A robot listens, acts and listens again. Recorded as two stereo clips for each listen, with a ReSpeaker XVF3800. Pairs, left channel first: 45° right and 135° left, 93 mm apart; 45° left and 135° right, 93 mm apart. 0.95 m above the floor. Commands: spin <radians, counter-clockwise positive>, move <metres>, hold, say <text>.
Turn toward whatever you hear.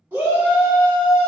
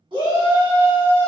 spin -2.71
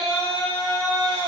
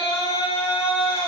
say Facing the shout.